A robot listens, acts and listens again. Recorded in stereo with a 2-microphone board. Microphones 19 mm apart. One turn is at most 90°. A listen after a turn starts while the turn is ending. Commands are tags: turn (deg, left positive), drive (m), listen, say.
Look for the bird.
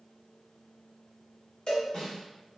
<listen/>
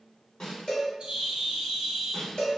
<turn deg="-50"/>
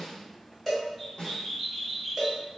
<say>Facing the bird, under 1 m away.</say>